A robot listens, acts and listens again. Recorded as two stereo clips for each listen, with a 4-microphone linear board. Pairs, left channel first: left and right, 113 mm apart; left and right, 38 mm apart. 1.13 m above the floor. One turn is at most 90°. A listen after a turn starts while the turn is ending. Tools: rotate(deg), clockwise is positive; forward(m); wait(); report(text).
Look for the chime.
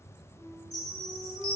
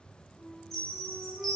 rotate(-30)
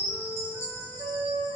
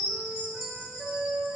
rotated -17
report("Found it: a chime, straight ahead.")